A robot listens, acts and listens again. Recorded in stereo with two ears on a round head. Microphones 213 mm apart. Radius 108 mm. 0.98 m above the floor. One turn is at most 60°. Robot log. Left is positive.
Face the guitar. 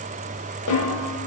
cmd idle
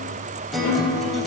cmd yaw +30
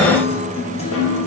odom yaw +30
note: So it is at 150° left.
cmd yaw +60
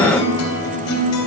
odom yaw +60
note: The guitar is now 95° left.
cmd yaw +60
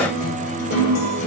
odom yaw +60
note: The guitar is now 30° left.
cmd yaw +30
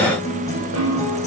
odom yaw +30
note: The guitar is now 15° left.
cmd yaw +15
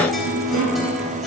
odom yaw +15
end: Found it: a guitar, straight ahead.